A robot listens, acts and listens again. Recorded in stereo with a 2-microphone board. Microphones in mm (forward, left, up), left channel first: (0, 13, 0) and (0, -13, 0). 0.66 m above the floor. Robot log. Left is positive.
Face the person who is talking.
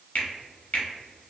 cmd idle
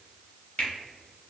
cmd idle
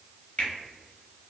end: I can't make out anyone speaking, only a finger snap.